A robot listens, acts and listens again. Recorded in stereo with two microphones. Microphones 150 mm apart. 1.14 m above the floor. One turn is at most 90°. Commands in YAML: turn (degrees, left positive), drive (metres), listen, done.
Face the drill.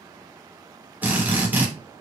turn: -30
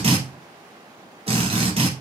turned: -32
turn: -90
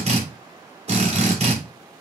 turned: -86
turn: -50
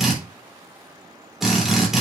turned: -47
done: "Facing the drill, 2 to 4 m away."